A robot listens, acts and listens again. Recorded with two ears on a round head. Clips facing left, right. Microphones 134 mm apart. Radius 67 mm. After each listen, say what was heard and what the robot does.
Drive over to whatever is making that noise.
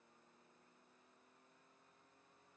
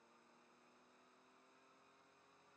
Keep listening.
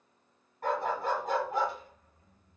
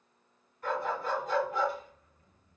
The dog barking: about 45° left or 135° left. Turn 45° left.
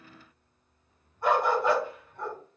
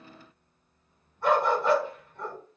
So it is at 10° left. Turn 10° left.
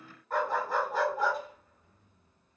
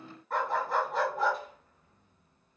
Drive 1.0 m forward.
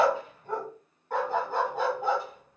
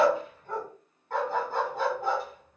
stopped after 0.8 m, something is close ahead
The dog barking is now 15° left. Turn 15° left.
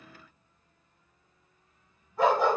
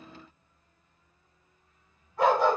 Arrived at the dog barking, straight ahead.